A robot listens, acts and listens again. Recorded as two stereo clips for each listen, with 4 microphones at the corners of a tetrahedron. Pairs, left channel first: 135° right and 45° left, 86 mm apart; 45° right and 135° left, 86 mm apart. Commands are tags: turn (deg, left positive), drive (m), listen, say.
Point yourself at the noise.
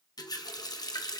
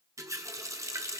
<turn deg="-175"/>
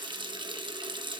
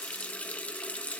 <turn deg="30"/>
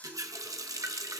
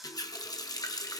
<say>Found it: a running tap, straight ahead, 1 to 2 m away.</say>